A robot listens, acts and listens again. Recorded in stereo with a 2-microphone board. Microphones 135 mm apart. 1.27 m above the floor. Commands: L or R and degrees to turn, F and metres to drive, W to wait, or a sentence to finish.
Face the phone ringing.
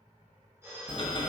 R20
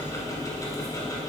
W
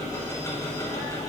W
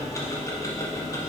I heard a phone ringing, but can't make it out now. It was about straight ahead or 140° right.